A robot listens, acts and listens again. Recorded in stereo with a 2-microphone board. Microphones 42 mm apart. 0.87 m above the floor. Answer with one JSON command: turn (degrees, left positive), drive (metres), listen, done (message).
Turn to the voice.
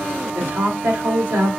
{"turn": -75}
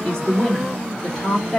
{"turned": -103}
{"turn": 15}
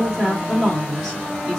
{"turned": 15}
{"done": "Facing the woman speaking."}